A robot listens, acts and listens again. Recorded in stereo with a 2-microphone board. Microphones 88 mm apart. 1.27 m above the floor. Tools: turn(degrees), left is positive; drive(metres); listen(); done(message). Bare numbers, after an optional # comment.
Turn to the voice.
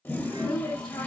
# The woman speaking: about 65° left or 115° left.
turn(65)
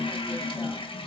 listen()
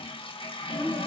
# So it is at 15° left.
turn(15)
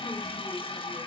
listen()
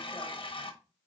listen()
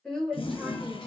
# The woman speaking is now 10° left.
turn(10)
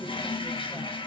listen()
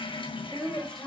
done("Facing the woman speaking, over 4 m away.")